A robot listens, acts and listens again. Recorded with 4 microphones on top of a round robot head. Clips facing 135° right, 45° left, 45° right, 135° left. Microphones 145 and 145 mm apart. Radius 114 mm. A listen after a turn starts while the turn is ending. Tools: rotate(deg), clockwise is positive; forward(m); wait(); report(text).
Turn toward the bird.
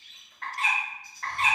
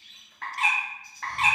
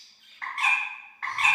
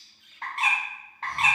rotate(-65)
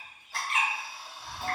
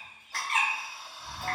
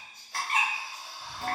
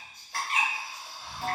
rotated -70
report("Facing the bird.")